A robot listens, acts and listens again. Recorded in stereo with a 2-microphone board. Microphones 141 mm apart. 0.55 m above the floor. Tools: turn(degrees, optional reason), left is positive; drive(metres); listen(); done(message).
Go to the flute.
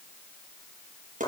listen()
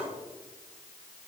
listen()
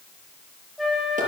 turn(degrees=30)
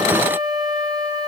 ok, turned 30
turn(degrees=-30, reason="So it is at 30° right.")
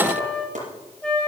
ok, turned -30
drive(metres=1.0)
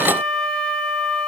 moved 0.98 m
drive(metres=1.0)
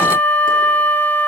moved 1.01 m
turn(degrees=15, reason="The flute is now 15° left.")
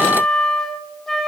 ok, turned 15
drive(metres=1.0)
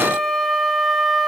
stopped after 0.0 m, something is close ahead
done("Arrived at the flute, straight ahead.")